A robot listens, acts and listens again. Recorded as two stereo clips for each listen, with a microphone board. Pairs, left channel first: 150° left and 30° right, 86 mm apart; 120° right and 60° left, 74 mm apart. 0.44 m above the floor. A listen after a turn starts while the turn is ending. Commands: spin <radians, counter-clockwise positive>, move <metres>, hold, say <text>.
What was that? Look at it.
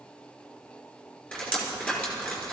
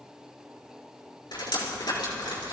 spin -2.36
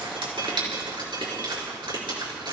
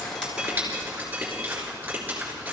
spin -0.17
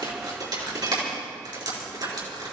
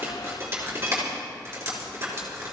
say Facing the dripping.